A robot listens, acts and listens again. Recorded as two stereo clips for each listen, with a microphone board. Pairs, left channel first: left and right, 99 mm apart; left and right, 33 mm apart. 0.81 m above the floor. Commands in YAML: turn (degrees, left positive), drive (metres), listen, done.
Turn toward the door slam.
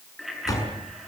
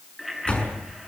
turn: 35
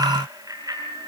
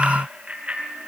listen: true
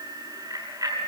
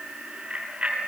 done: "I heard a door slam, but can't make it out now. It was about straight ahead or 110° left."